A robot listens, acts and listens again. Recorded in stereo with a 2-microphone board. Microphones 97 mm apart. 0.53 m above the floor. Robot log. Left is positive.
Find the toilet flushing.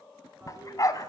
note: The toilet flushing: about 25° right or 155° right.
cmd yaw -25
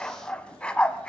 cmd idle
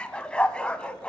cmd idle
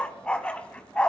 end: I heard a toilet flushing, but can't make it out now. It was about straight ahead or 130° right.